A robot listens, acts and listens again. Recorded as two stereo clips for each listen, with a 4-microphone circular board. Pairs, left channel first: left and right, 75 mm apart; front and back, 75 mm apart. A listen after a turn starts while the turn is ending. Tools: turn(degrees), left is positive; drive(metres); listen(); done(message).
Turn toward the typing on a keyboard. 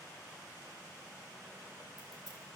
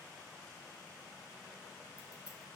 listen()
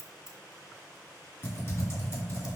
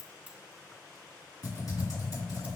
turn(degrees=35)
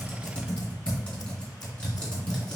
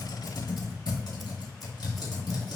turn(degrees=15)
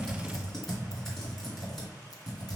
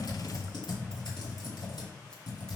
done("Facing the typing on a keyboard.")